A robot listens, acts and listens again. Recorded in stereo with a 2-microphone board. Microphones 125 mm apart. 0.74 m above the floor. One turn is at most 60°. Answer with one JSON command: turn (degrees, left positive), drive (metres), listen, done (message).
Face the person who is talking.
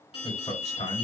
{"turn": 60}
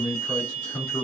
{"done": "Facing the man speaking, 2 to 4 m away."}